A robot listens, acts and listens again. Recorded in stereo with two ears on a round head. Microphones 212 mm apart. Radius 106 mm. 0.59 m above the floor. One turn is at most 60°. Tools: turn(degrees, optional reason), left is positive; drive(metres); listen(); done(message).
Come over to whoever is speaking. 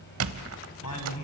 turn(degrees=60)
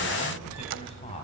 turn(degrees=30, reason="So it is at 30° left.")
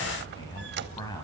turn(degrees=15, reason="The man speaking is now 15° left.")
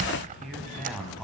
drive(metres=1.0)
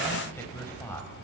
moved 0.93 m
turn(degrees=10, reason="The man speaking is now 10° left.")
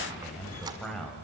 drive(metres=1.0)
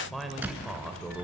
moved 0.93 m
drive(metres=1.0)
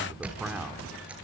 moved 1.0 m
drive(metres=1.0)
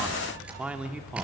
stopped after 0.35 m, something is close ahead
done("I am next to the man speaking.")